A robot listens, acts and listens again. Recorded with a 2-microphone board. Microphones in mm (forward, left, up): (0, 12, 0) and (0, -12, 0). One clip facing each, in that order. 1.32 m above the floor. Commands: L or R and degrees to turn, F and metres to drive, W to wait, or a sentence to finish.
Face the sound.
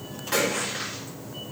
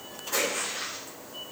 L90
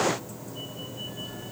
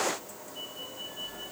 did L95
Facing where the splash came from. I can't hear it now.